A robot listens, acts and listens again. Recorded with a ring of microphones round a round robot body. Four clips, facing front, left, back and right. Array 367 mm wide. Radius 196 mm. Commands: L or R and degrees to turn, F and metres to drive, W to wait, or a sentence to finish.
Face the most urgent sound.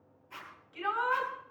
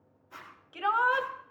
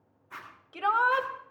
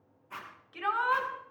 L155
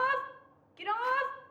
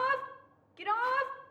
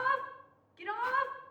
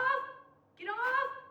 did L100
L60
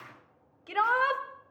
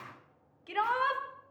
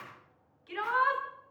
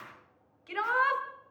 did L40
L15
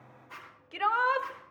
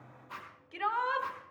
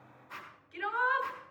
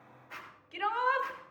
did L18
Found it: a shout, straight ahead, 2 to 4 m away.